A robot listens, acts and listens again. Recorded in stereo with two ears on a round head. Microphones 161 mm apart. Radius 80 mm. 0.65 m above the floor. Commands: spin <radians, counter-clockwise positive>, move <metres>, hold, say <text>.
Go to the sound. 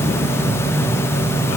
hold
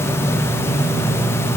hold
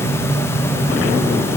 say I can't make out anything to turn to.